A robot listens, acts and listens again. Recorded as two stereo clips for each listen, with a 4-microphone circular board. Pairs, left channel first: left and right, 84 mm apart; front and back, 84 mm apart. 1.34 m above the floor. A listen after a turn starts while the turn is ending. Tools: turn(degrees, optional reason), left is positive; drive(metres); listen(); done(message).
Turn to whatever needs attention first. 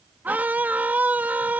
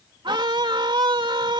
turn(degrees=-160, reason="The scream: 160° right.")
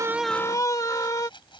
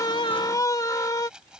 turn(degrees=45, reason="The scream is now 45° left.")
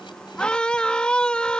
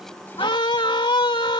turn(degrees=10, reason="The scream is now 10° left.")
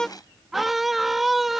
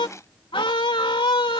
done("Facing the scream.")